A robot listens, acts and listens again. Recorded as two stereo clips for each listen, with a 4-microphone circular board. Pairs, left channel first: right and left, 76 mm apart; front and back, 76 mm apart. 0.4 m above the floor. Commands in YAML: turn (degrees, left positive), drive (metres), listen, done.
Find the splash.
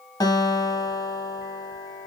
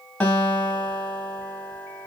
listen: true
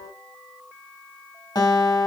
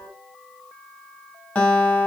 listen: true
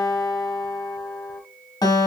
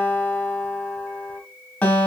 done: "I can't make out a splash, only a guitar."